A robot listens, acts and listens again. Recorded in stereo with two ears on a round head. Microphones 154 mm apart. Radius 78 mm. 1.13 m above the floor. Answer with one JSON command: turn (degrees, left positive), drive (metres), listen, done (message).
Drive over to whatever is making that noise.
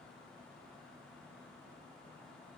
{"listen": true}
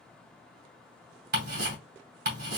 {"turn": -55}
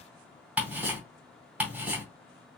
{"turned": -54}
{"turn": -10}
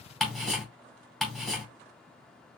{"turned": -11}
{"drive": 1.0}
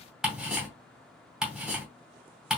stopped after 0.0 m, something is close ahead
{"done": "Something is in my way. I am facing the ticking but have not reached it."}